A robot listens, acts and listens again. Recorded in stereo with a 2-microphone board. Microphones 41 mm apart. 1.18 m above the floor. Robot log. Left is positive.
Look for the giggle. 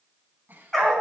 note: The giggle: about 45° right or 135° right.
cmd yaw -45
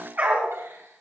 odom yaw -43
note: So it is at 95° right.
cmd yaw -95
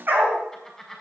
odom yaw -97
end: Found it: a giggle, straight ahead, over 4 m away.